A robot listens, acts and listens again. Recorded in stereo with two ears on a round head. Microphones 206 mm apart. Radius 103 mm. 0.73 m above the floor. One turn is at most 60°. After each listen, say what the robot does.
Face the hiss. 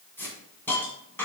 Turn 30° left.
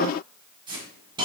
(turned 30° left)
Turn 20° right.
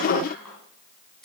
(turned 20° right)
Found it: a hiss, straight ahead, 2 to 4 m away.